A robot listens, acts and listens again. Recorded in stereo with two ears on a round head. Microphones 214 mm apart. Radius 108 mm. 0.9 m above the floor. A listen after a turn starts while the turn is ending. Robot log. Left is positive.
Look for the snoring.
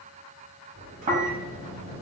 note: The snoring: about 30° right or 150° right.
cmd yaw -30
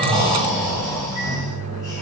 end: Found it: snoring, straight ahead, under 1 m away.